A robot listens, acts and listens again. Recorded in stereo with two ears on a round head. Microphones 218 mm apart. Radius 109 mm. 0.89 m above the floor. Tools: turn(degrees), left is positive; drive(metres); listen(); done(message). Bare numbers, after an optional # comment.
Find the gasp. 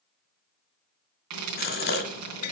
# The gasp: about 40° left or 140° left.
turn(40)
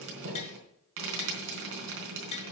listen()
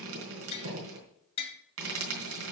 done("I heard a gasp, but can't make it out now. It was about straight ahead or 100° left.")